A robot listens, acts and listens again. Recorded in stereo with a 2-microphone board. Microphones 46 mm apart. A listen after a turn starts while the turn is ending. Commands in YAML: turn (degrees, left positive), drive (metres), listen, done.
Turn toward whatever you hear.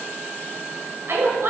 turn: -70
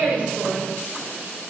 done: "Facing the woman speaking, 2 to 4 m away."